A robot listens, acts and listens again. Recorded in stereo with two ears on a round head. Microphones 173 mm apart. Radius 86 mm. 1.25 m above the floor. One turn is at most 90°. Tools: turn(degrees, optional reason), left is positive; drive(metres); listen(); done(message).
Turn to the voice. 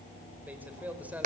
turn(degrees=-30)
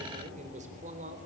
turn(degrees=-90, reason="So it is at 140° right.")
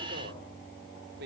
turn(degrees=-55, reason="The man speaking is now 55° right.")
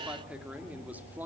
turn(degrees=-10, reason="The man speaking is now 10° right.")
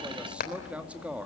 done("Found it: a man speaking, straight ahead.")